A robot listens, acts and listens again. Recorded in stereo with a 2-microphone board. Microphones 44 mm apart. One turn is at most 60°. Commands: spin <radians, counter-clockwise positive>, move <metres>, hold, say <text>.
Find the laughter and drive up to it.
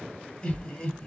spin 0.52
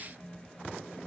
hold
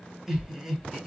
move 1.0
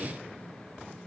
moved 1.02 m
hold
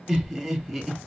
move 1.0
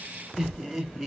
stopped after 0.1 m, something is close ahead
say Arrived at the laughter, straight ahead.